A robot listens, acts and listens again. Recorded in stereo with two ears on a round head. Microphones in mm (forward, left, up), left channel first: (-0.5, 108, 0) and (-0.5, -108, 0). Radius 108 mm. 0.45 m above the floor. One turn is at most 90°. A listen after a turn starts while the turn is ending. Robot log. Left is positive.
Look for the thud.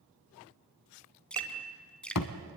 cmd yaw +90
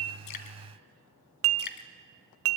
end: I heard a thud from this way, but can't make it out now.